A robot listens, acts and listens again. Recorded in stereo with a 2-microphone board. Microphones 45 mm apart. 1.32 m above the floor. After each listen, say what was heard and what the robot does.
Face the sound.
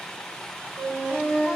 The flute: about 75° right or 105° right. Turn 75° right.
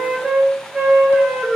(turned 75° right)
So it is at 20° right. Turn 20° right.
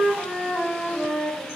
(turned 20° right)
Facing the flute.